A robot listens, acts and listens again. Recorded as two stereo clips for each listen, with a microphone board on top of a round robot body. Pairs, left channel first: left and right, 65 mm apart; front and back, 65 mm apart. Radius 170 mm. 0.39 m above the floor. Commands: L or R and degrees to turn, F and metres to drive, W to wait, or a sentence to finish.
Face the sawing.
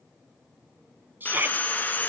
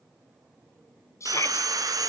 L155
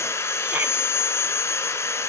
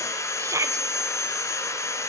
L45
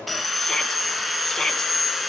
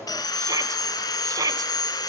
Found it: sawing, straight ahead.